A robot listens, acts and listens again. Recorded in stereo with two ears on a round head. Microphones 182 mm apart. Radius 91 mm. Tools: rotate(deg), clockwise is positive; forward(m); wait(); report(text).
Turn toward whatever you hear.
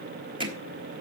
rotate(25)
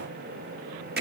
rotate(125)
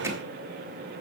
wait()
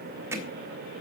rotate(15)
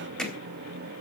report("Facing the hammering, 2 to 4 m away.")